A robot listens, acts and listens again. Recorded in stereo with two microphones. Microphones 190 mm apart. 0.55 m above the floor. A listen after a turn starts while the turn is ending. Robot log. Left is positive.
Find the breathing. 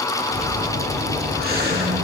note: The breathing: about 55° right or 125° right.
cmd yaw -55
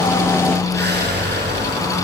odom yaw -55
note: So it is at 65° right.
cmd yaw -65
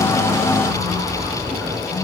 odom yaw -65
end: Facing the breathing, over 4 m away.